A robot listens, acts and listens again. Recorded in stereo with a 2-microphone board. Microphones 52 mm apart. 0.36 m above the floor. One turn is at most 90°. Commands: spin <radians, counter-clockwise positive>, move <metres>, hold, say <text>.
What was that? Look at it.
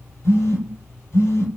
spin 0.96
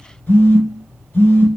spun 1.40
spin 0.70
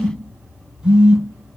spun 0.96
spin -0.26
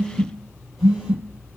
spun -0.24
say Facing the phone buzzing.